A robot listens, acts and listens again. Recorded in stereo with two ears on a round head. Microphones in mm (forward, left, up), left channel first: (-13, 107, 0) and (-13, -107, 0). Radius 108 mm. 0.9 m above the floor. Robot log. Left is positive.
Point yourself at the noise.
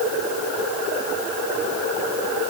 cmd idle
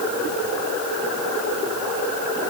cmd idle
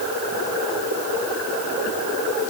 end: I can't make out anything to turn to.